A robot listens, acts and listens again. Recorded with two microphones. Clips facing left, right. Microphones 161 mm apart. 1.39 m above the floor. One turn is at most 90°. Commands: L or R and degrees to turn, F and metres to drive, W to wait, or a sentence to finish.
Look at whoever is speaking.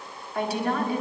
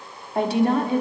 R25
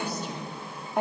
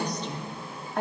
L15
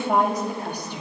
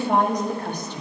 L10
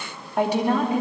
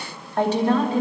L15
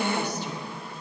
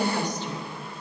L10
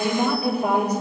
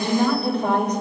L10
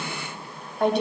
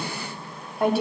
Found it: a woman speaking, straight ahead, 2 to 4 m away.